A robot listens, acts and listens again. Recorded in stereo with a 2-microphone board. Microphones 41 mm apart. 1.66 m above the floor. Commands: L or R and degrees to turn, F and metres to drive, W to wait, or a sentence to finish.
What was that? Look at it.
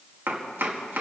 R65
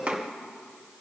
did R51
R40
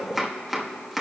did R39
Found it: chopping, straight ahead, 1 to 2 m away.